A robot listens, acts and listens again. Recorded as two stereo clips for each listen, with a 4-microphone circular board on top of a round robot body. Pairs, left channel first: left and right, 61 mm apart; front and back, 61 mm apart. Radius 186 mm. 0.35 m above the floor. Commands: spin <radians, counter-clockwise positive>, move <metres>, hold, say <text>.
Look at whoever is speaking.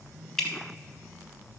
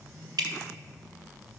hold
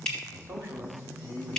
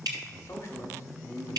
spin -0.70
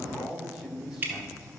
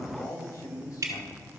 say Found it: a man speaking, straight ahead.